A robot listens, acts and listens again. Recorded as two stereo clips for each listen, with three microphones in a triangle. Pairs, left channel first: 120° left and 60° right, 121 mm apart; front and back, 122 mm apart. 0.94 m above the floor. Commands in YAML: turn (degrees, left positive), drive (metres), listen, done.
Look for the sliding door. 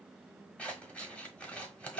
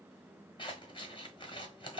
listen: true
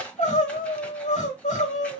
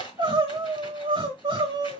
listen: true
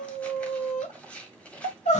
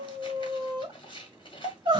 done: "I can't make out a sliding door, only crying and scissors."